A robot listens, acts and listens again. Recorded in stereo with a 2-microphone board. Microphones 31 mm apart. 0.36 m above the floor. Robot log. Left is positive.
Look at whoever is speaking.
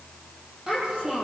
note: The child speaking: about 15° right or 165° right.
cmd yaw -15
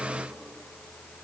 cmd idle
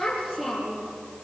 end: Facing the child speaking.